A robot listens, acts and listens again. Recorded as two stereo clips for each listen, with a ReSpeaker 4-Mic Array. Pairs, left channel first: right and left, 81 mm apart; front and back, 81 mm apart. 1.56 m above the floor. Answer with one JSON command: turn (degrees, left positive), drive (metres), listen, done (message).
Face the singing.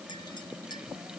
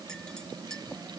{"listen": true}
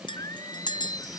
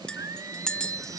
{"turn": -135}
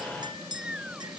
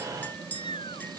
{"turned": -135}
{"turn": 10}
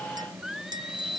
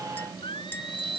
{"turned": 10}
{"done": "Facing the singing."}